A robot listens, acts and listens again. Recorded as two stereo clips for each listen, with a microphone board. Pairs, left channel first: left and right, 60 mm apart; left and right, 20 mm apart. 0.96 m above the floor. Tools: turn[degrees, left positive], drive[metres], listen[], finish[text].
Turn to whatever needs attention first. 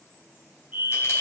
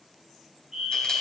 Thought: The fire alarm: about 30° right or 150° right.
Action: turn[-30]
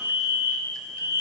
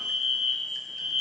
Thought: So it is at 115° right.
Action: turn[-115]
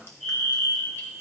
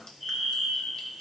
Action: finish[Found it: a fire alarm, straight ahead, 2 to 4 m away.]